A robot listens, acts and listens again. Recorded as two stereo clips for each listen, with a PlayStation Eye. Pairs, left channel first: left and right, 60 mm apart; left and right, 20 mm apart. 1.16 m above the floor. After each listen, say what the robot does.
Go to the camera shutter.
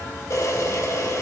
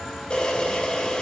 Turn 60° left.
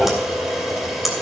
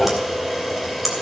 Drive 1.0 m forward.
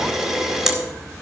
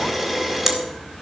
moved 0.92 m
Turn 10° right.
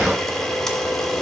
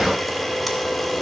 Drive 1.0 m forward.
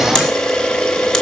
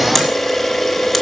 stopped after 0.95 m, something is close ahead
Turn 10° left.
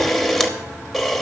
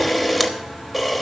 Arrived at the camera shutter, straight ahead.